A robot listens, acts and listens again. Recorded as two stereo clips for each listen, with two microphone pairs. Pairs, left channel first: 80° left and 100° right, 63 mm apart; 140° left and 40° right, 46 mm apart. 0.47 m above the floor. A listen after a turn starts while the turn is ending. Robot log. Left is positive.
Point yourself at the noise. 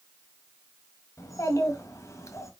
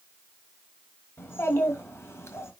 note: The child speaking: 120° left.
cmd yaw +120
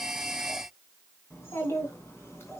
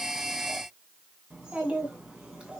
note: The child speaking is now 30° left.
cmd yaw +30
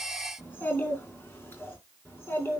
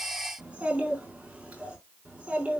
note: The child speaking is now 20° left.
cmd yaw +20
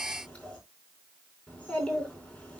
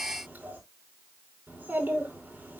end: Found it: a child speaking, straight ahead.